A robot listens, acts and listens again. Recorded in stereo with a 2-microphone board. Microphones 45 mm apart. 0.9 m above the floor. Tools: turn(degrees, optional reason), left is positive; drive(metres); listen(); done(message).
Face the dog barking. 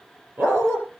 turn(degrees=-50, reason="The dog barking: about 50° right or 130° right.")
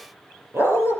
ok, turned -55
turn(degrees=-75, reason="So it is at 75° right.")
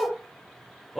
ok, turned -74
done("Found it: a dog barking, straight ahead.")